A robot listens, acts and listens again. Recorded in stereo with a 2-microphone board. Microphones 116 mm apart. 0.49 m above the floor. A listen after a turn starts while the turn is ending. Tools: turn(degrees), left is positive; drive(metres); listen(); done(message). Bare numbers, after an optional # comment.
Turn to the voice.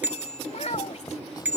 # The child speaking: about 70° left or 110° left.
turn(70)
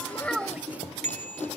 listen()
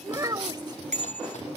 # So it is at 35° right.
turn(-35)
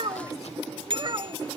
# The child speaking is now 45° right.
turn(-45)
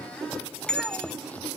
listen()
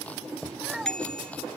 done("Facing the child speaking.")